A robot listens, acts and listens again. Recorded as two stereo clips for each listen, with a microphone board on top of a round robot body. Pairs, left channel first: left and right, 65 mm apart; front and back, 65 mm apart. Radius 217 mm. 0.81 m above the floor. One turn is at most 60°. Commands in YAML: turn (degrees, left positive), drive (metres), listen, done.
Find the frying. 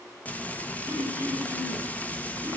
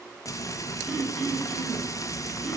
turn: 25
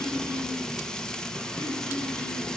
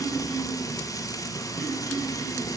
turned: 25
turn: 10
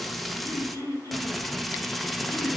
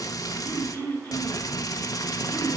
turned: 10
done: "Facing the frying."